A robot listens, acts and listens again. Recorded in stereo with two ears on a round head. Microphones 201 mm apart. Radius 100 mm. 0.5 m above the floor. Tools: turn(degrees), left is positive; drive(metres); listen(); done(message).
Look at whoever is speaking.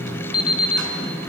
listen()
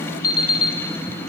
listen()
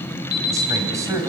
turn(degrees=-30)
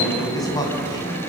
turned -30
turn(degrees=15)
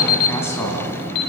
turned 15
turn(degrees=10)
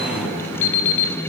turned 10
listen()
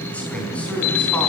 done("Found it: a man speaking, straight ahead.")